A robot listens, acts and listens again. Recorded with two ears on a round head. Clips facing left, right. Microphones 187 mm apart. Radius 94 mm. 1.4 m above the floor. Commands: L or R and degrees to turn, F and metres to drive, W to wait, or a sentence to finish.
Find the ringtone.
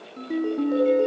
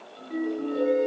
L90
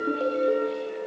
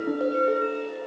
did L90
Facing the ringtone.